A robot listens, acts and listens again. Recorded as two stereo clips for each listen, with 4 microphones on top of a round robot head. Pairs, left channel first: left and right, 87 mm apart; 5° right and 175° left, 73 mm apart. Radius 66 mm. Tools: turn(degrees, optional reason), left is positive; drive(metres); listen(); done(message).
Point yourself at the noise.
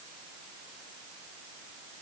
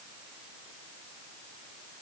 listen()
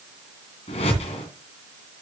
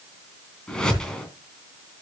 turn(degrees=75, reason="The whoosh: 75° left.")
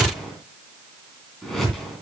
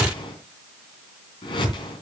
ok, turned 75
done("Found it: a whoosh, straight ahead.")